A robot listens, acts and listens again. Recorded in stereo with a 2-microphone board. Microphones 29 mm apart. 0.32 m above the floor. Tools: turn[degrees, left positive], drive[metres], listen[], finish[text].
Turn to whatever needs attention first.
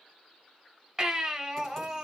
Action: turn[-30]
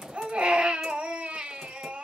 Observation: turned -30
Thought: So it is at 135° right.
Action: turn[-135]
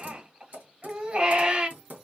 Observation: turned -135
Thought: The baby crying is now 50° right.
Action: turn[-50]
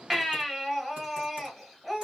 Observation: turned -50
Thought: The baby crying is now 10° right.
Action: turn[-10]
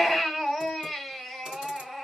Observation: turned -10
Action: finish[Facing the baby crying, 1 to 2 m away.]